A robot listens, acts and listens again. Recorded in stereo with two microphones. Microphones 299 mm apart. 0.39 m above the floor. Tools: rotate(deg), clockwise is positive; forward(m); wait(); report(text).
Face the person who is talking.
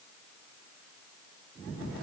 wait()
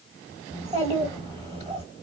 rotate(20)
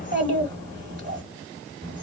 rotate(135)
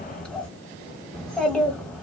report("Found it: a child speaking, straight ahead.")